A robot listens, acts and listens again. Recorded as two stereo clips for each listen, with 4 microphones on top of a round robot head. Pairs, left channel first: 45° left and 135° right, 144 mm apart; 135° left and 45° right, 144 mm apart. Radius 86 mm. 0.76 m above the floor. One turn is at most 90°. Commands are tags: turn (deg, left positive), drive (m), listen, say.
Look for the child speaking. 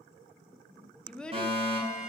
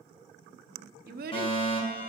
<turn deg="-40"/>
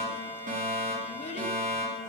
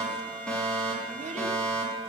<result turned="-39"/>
<listen/>
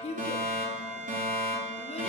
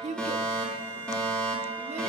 <say>Facing the child speaking, under 1 m away.</say>